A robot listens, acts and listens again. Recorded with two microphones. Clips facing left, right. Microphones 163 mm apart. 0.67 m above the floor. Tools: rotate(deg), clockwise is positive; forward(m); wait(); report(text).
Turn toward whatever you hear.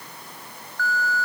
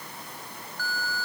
rotate(-60)
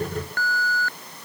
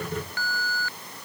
rotate(-55)
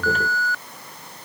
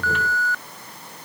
report("Facing the alarm.")